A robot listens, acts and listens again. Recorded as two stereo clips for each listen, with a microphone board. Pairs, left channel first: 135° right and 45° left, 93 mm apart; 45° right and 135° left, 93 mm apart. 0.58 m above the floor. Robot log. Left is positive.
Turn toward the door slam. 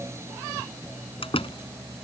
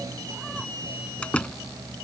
note: The door slam: 125° right.
cmd yaw -125
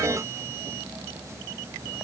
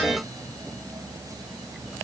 end: Facing where the door slam came from. I can't hear it now.